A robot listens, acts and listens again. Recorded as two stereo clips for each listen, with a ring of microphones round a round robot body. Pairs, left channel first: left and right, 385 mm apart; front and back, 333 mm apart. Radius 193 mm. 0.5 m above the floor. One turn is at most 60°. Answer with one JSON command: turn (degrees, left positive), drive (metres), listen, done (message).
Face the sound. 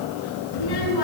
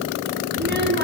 {"turn": 60}
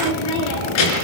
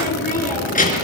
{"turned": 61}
{"turn": 60}
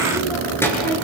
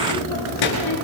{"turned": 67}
{"done": "Found it: a child speaking, straight ahead, over 4 m away."}